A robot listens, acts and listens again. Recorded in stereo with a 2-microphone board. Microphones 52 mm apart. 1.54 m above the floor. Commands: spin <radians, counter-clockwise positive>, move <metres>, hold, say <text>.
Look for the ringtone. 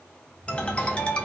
spin 0.35
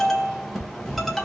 say Found it: a ringtone, straight ahead.